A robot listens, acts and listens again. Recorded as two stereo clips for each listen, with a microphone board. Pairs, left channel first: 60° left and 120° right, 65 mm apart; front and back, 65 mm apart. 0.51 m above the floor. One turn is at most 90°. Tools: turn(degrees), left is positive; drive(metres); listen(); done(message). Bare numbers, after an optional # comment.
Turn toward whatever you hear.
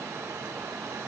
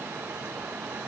listen()
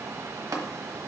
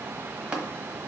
# The tapping: 105° right.
turn(-90)
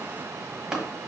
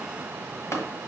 # The tapping is now 40° right.
turn(-40)
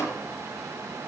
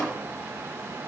# The tapping is now 15° left.
turn(15)
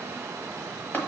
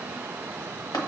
done("Found it: tapping, straight ahead.")